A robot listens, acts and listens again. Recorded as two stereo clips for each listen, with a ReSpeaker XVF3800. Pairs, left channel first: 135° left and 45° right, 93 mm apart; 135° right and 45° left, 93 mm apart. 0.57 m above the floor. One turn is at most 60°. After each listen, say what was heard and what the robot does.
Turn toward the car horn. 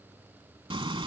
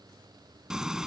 Keep listening.
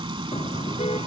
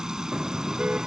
The car horn: 125° left. Turn 60° left.
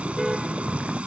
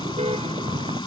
The car horn is now 40° left. Turn 40° left.
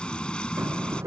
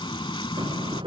The car horn is now 15° left. Turn 15° left.
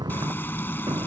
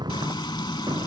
Facing the car horn.